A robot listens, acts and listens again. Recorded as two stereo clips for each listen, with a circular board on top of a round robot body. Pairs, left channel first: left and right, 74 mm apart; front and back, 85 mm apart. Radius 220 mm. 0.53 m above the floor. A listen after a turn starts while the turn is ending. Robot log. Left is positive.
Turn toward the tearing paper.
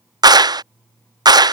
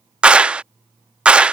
cmd idle
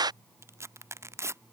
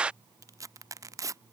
note: The tearing paper: 135° right.
cmd yaw -135
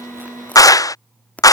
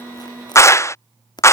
note: The tearing paper is now 20° left.
cmd yaw +20
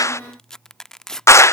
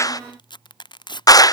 note: The tearing paper is now 10° left.
cmd yaw +10
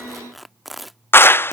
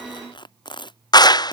end: Facing the tearing paper.